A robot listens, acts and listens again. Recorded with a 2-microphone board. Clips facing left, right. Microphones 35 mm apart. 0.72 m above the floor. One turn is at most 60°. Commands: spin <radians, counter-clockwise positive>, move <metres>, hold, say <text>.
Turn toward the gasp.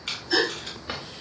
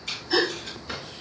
spin 0.52
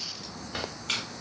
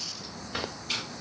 hold
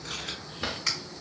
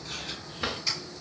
say I heard a gasp, but can't make it out now. It was about 30° right or 150° left.